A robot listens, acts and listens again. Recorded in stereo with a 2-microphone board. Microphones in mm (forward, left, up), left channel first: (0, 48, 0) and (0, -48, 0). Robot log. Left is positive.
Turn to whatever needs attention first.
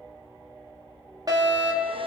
note: The fire alarm: about 40° right or 140° right.
cmd yaw -40
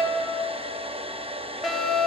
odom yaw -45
end: Facing the fire alarm.